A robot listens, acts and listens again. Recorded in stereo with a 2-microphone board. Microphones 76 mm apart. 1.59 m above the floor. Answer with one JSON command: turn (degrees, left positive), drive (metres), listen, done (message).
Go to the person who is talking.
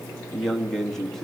{"turn": 30}
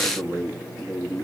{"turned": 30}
{"turn": -30}
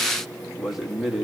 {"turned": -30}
{"drive": 1.0}
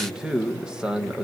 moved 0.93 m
{"turn": -10}
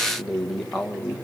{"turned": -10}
{"drive": 1.0}
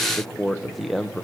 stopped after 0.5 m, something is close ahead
{"done": "I am next to the man speaking."}